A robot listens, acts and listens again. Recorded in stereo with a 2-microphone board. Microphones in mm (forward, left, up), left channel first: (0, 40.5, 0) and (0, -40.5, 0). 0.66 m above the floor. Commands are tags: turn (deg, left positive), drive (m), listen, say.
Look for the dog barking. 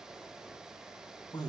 <listen/>
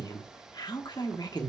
<listen/>
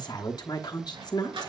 <turn deg="-90"/>
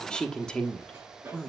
<turn deg="-25"/>
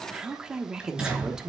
<turn deg="-10"/>
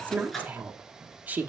<say>Found it: a dog barking, straight ahead.</say>